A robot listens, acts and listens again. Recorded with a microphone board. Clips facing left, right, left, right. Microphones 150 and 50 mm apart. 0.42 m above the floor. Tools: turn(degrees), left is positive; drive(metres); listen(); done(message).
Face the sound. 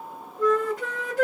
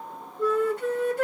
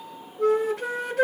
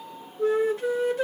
turn(degrees=90)
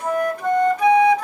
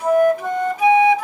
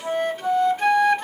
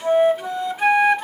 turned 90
done("Found it: a flute, straight ahead.")